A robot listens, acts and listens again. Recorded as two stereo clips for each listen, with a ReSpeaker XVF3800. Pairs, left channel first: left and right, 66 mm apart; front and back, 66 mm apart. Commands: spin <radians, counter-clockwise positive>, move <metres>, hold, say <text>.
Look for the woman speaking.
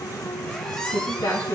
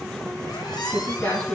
spin 1.05
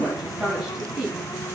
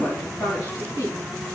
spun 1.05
say Found it: a woman speaking, straight ahead.